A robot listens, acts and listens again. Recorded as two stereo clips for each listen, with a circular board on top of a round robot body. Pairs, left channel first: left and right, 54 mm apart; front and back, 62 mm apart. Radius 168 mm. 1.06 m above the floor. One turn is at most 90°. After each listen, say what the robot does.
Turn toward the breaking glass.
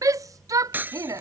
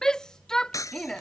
Turn 35° right.
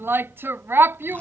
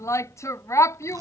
I heard breaking glass from this way, but can't make it out now.